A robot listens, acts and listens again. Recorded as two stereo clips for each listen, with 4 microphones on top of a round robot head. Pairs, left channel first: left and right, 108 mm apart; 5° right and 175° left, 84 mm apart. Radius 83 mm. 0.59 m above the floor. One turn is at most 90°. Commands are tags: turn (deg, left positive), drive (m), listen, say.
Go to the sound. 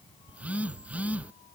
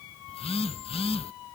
<turn deg="-10"/>
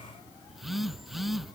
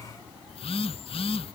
<drive m="1.0"/>
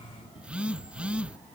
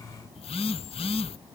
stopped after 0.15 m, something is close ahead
<say>Something is in my way. I am facing the phone buzzing but have not reached it.</say>